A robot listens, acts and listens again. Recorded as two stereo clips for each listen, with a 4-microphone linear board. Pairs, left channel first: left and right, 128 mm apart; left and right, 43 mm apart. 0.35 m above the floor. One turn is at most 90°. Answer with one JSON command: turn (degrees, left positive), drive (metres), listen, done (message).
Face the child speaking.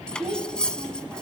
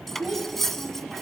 {"turn": -30}
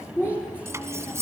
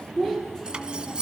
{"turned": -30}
{"turn": 15}
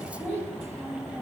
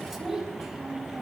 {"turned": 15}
{"done": "Facing the child speaking."}